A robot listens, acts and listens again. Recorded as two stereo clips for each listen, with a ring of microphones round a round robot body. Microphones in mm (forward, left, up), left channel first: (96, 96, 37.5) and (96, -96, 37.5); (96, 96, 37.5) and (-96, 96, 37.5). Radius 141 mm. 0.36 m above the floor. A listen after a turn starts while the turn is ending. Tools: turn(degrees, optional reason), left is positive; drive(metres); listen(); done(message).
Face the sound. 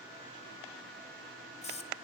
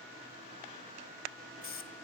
turn(degrees=35, reason="The hiss: 35° left.")
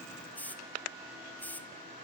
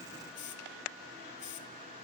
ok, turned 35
turn(degrees=10, reason="The hiss is now 10° left.")
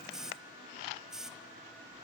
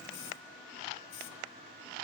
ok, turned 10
done("Found it: a hiss, straight ahead.")